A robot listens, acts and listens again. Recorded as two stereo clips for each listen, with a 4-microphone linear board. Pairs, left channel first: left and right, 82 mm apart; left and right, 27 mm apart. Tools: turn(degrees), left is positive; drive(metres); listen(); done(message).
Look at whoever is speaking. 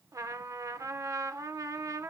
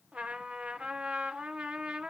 listen()
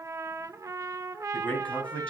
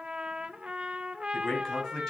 turn(degrees=30)
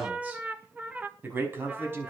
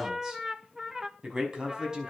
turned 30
turn(degrees=-30)
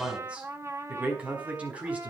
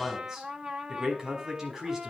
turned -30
turn(degrees=-15)
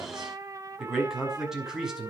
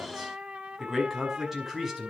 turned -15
done("Facing the man speaking, over 4 m away.")